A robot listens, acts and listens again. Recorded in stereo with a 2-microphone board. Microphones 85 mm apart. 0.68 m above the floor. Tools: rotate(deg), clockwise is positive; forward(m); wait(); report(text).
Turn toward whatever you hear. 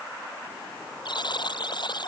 rotate(-60)
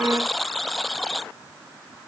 report("Found it: a buzzer, straight ahead.")